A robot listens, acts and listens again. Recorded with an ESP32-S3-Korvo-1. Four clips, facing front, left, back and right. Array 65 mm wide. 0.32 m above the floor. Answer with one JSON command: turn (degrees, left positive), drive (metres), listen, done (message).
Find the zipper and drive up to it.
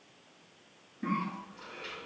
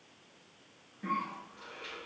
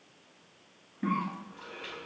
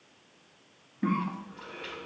{"listen": true}
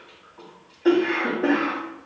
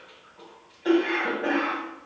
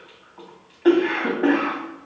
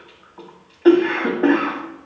{"listen": true}
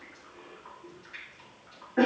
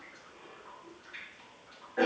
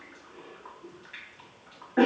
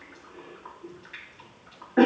{"done": "I can't make out a zipper, only a cough."}